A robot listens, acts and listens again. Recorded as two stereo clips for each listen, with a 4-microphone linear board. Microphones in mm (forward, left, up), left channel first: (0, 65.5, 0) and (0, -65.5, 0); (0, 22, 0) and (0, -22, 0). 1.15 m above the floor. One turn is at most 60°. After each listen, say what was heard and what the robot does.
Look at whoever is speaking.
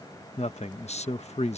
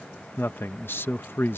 The man speaking: about 55° left or 125° left. Turn 55° left.
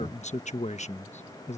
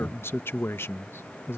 So it is at 65° left. Turn 60° left.
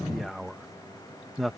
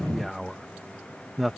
Found it: a man speaking, straight ahead.